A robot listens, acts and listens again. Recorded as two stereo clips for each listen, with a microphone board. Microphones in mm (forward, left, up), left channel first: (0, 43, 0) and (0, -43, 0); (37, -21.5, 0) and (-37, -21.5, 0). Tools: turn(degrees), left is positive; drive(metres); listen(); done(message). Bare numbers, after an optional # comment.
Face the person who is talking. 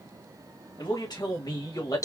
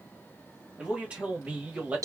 # The man speaking: 115° left.
turn(115)
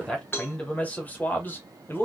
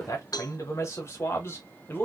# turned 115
# The man speaking is now 45° left.
turn(45)
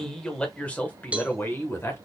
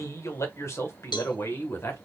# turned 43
# The man speaking is now 45° left.
turn(45)
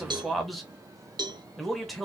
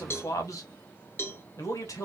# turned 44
done("Found it: a man speaking, straight ahead.")